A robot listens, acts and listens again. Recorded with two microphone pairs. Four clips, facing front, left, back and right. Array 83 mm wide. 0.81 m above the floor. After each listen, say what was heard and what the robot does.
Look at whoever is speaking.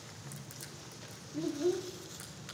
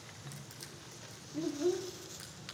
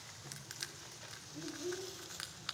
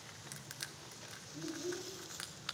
The child speaking: 50° left. Turn 50° left.
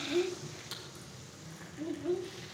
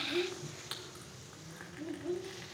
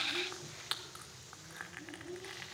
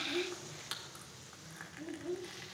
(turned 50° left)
The child speaking is now 10° left. Turn 10° left.
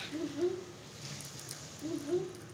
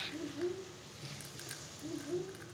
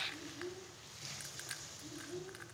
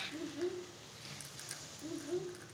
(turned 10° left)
Found it: a child speaking, straight ahead, 1 to 2 m away.